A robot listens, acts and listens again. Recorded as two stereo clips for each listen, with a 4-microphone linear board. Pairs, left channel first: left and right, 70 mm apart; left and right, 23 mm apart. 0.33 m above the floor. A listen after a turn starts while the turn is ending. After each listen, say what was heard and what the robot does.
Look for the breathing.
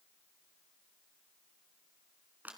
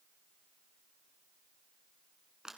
Keep listening.
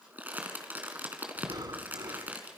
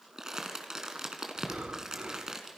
The breathing: about 65° right or 115° right. Turn 65° right.
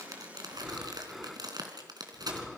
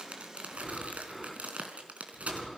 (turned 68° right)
Facing the breathing.